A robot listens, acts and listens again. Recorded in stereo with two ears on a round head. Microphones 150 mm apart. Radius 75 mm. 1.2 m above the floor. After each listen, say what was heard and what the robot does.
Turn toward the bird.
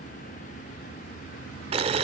Keep listening.
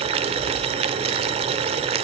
Keep listening.
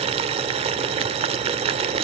I can't make out a bird, only boiling.